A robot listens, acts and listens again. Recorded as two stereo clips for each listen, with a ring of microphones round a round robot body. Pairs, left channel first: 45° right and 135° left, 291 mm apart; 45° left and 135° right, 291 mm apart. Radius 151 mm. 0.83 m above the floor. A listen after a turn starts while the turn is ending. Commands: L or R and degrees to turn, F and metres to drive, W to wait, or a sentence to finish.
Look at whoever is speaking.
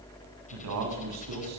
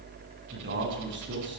L170
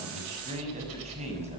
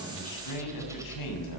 L65
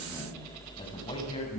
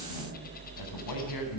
W
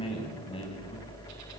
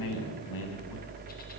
L30
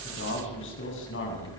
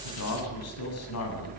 Found it: a man speaking, straight ahead.